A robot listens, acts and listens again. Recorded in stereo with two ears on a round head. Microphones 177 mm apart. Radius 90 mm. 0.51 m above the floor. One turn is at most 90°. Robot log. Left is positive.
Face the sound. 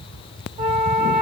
note: The flute: about 40° right or 140° right.
cmd yaw -40
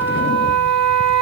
note: So it is at 100° right.
cmd yaw -90
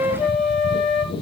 note: The flute is now 15° right.
cmd yaw -15
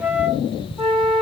end: Facing the flute.